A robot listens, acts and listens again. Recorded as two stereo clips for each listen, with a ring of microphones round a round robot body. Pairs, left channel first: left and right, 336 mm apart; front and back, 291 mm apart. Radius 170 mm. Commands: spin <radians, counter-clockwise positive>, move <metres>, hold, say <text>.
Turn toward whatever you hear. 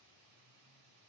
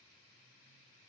hold
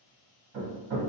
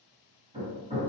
spin -1.83
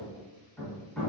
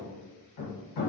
say Found it: hammering, straight ahead.